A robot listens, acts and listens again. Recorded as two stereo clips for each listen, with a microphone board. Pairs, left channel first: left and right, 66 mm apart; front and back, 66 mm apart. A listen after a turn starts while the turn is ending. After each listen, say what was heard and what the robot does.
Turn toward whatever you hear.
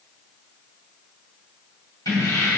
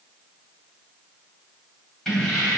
The keys jangling: 90° left. Turn 90° left.
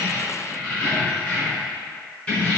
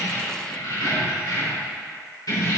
The keys jangling is now 20° left. Turn 20° left.
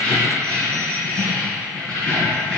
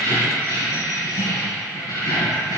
The keys jangling is now 10° left. Turn 10° left.
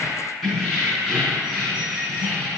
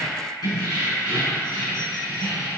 Found it: keys jangling, straight ahead.